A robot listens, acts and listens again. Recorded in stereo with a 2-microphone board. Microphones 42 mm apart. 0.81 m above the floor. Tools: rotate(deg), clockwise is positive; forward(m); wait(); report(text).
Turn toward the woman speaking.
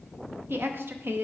rotate(55)
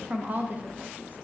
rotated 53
rotate(50)
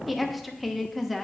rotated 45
report("Found it: a woman speaking, straight ahead, under 1 m away.")